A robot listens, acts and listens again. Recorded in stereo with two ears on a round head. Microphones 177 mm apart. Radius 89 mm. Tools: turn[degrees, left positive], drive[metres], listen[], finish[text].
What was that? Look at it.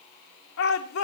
Action: turn[90]
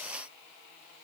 Action: listen[]
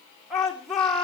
Action: finish[Found it: a shout, straight ahead.]